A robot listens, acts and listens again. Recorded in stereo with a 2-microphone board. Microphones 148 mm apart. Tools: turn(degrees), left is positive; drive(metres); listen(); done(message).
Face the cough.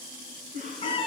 turn(degrees=-60)
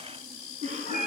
turn(degrees=-50)
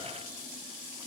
listen()
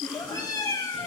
done("Found it: a cough, straight ahead, 2 to 4 m away.")